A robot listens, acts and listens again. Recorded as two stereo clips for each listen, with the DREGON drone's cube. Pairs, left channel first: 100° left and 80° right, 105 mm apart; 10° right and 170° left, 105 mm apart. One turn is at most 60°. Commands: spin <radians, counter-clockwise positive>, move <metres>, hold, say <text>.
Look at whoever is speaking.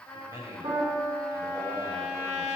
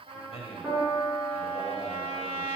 spin -0.35
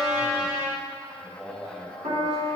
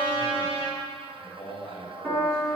say Found it: a man speaking, straight ahead.